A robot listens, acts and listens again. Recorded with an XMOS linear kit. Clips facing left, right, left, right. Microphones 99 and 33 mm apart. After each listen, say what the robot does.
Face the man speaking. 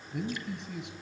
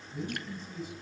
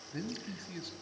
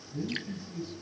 Turn 70° left.
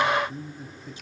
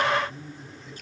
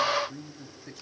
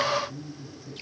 Turn 45° left.
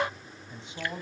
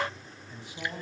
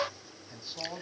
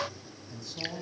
Turn 25° left.
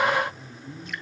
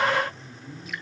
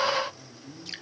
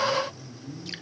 Turn 15° left.
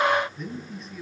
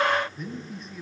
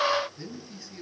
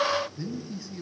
Found it: a man speaking, straight ahead.